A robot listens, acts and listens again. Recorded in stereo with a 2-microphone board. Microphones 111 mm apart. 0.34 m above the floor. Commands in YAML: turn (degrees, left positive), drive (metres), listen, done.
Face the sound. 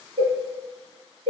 turn: -90
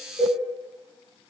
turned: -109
done: "Facing the cowbell."